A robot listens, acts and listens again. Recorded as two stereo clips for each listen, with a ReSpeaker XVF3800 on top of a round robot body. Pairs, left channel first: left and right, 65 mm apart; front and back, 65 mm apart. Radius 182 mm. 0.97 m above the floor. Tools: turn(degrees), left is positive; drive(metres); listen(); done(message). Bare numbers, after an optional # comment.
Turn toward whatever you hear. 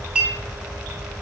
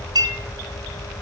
# The clink: 165° right.
turn(-165)
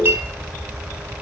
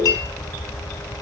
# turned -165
# The clink is now 30° right.
turn(-30)
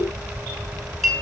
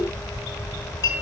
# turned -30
done("Found it: a clink, straight ahead.")